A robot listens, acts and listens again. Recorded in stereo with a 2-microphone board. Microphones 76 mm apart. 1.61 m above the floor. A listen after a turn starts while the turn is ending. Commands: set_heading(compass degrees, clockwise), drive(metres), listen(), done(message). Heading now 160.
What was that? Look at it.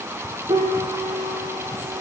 set_heading(250)
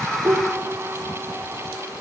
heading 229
set_heading(249)
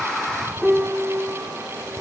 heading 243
done("Facing the piano.")